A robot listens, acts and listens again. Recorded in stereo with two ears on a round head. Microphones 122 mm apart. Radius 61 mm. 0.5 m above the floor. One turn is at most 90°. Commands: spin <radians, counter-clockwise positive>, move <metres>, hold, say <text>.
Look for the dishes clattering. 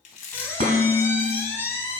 spin -0.87
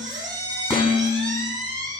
say Found it: dishes clattering, straight ahead.